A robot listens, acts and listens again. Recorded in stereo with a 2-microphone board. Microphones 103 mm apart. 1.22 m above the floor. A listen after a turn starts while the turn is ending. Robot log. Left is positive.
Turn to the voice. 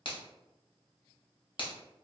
cmd idle
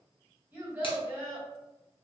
note: The child speaking: about 20° right or 160° right.
cmd yaw -20
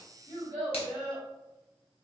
note: So it is at 140° right.
cmd yaw -140
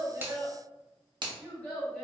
note: The child speaking is now 15° left.
cmd yaw +15
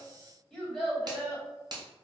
end: Found it: a child speaking, straight ahead.